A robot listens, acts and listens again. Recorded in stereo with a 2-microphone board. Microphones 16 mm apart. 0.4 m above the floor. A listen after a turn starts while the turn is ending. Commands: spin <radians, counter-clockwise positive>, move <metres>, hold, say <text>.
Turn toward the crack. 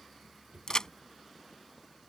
spin 0.70
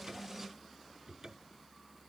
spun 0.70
hold
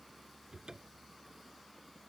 say I heard a crack, but can't make it out now. It was about straight ahead or 100° left.